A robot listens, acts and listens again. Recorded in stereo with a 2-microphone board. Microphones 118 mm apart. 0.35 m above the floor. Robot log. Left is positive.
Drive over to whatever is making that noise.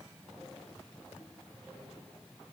cmd idle
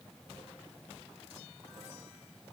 cmd idle
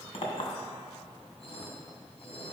note: The clink: about 55° left or 125° left.
cmd yaw +55
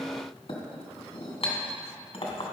note: So it is at 60° left.
cmd yaw +60
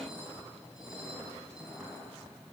cmd fwd 1.0
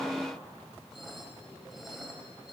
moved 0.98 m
cmd idle
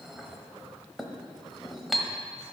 cmd fwd 1.0
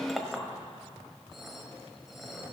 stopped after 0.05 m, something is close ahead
end: I am next to the clink.